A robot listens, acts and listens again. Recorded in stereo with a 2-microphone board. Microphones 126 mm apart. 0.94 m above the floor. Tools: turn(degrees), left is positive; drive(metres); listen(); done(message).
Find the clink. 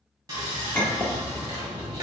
turn(degrees=30)
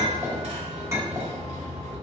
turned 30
turn(degrees=-20)
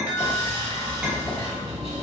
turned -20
listen()
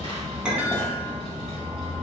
done("Facing the clink.")